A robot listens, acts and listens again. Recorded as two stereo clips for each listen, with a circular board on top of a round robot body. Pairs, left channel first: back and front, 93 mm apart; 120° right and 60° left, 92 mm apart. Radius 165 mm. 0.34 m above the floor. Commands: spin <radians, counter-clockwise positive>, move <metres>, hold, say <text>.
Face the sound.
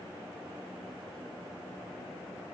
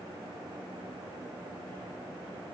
hold
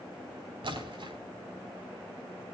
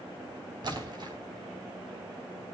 spin 0.44
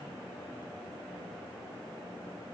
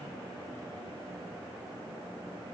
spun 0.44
say Facing where the splash came from. I can't hear it now.